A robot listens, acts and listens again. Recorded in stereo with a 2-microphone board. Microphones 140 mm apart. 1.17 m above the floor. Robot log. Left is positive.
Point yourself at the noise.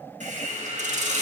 note: The hiss: about 55° right or 125° right.
cmd yaw -55
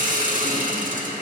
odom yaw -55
note: So it is at 70° right.
cmd yaw -70
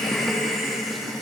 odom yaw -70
end: Found it: a hiss, straight ahead, 1 to 2 m away.